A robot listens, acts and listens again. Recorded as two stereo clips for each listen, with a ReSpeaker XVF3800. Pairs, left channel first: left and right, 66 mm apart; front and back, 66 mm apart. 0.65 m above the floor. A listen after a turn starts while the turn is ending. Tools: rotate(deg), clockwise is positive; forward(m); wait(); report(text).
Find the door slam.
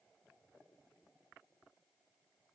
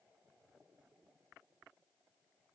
wait()
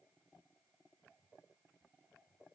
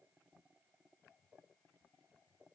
wait()
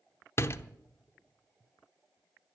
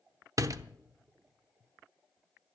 rotate(-140)
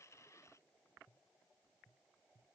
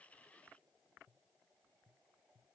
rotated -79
rotate(-65)
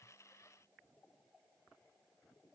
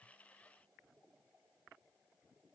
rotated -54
rotate(-10)
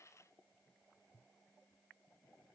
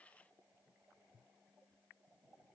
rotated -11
report("Facing where the door slam came from. I can't hear it now.")